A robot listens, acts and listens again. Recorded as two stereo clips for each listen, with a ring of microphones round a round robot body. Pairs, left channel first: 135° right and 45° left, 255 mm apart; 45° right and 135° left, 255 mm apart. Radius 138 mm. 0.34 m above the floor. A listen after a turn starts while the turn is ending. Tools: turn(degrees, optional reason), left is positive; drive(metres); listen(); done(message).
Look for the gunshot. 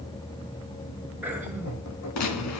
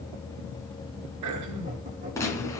turn(degrees=-125, reason="The gunshot: 125° right.")
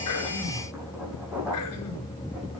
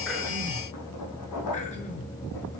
done("Facing where the gunshot came from. I can't hear it now.")